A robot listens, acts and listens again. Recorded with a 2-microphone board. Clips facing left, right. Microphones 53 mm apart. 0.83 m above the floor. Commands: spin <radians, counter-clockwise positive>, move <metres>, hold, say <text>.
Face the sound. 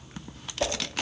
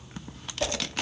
spin 0.26
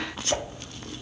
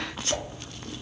spin 2.62
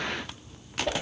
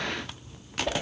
say Facing the whoosh.